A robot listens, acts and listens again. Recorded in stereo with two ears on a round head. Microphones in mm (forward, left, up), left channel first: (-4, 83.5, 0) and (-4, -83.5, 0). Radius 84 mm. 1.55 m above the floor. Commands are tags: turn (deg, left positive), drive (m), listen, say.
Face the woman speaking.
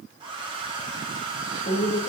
<turn deg="60"/>
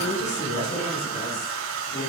<turn deg="60"/>
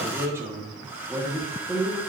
<turn deg="-10"/>
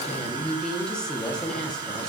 <say>Found it: a woman speaking, straight ahead, 1 to 2 m away.</say>